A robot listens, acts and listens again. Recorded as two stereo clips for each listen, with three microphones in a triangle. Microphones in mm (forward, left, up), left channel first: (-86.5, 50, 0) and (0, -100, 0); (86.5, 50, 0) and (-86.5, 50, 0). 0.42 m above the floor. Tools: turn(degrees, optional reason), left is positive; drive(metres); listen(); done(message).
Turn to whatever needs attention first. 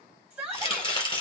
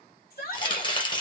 turn(degrees=20, reason="The shout: 20° left.")
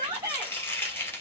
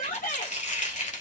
done("Facing the shout, 2 to 4 m away.")